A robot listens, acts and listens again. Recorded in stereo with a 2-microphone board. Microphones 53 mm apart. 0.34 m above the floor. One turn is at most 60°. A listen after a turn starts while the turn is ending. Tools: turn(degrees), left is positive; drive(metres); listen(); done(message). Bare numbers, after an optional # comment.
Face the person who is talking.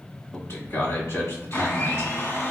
# The man speaking: about 55° left or 125° left.
turn(55)
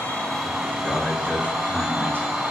# So it is at 35° left.
turn(35)
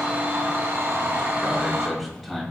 done("Facing the man speaking.")